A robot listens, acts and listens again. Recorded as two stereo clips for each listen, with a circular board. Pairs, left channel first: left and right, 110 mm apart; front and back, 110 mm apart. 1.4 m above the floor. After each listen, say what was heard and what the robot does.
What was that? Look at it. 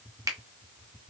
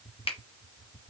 The finger snap: 30° right. Turn 30° right.
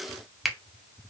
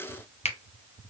Facing the finger snap, under 1 m away.